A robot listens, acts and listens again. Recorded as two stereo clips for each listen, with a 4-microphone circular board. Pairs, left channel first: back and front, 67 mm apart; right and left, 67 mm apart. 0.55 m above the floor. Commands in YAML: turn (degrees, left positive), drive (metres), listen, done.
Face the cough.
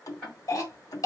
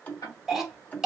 turn: 175
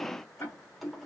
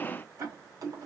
listen: true
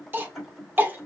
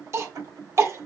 turn: 55
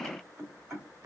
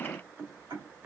listen: true
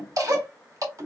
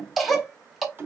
done: "Found it: a cough, straight ahead."